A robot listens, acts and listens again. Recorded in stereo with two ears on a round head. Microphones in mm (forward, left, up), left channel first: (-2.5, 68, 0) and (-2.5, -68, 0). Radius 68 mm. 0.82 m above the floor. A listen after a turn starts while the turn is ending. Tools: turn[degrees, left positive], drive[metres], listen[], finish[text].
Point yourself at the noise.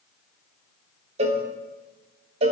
Thought: The cowbell: about 40° right or 140° right.
Action: turn[-40]
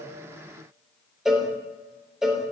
Action: finish[Facing the cowbell.]